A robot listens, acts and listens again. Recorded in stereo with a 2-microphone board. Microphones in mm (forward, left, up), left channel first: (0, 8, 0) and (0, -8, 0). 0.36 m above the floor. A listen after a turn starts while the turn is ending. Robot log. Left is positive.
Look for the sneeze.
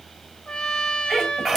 note: The sneeze: about 30° right or 150° right.
cmd yaw -30
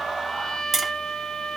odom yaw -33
cmd idle
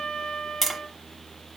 end: I heard a sneeze, but can't make it out now. It was about 5° left or 120° right.